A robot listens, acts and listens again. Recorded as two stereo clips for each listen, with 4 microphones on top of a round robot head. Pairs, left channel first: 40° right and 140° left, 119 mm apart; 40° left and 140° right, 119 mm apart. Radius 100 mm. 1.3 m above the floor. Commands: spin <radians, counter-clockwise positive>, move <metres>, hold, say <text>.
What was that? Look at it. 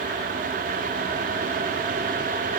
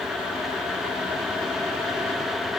hold
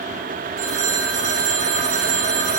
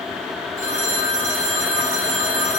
spin 2.71
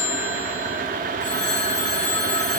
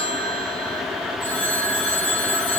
spin -0.61
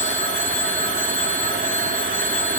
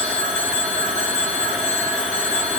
say Facing the phone ringing.